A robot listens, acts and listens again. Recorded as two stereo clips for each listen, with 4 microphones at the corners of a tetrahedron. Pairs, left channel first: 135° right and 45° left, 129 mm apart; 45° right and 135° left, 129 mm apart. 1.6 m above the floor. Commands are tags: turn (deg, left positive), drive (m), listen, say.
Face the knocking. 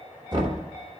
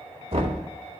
<turn deg="95"/>
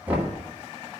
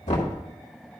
<turn deg="-30"/>
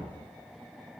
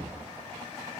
<listen/>
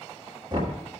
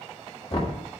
<say>Facing the knocking.</say>